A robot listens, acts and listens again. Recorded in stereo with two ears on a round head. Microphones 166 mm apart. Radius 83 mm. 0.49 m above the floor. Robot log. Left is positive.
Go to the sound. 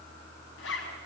note: The zipper: about 70° left or 110° left.
cmd yaw +70
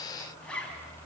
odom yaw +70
cmd fwd 1.0
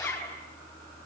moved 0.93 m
note: The zipper is now 10° left.
cmd yaw +10
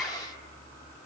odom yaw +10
cmd fwd 1.0
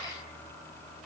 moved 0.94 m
cmd idle
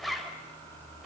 cmd fwd 1.0
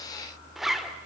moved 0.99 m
cmd fwd 1.0
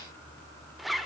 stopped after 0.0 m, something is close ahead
end: I am next to the zipper.